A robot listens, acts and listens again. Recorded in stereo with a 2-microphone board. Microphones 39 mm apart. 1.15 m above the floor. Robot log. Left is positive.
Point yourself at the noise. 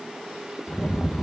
note: The rattle: about 35° left or 145° left.
cmd yaw +35
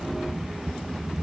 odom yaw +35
end: Facing the rattle.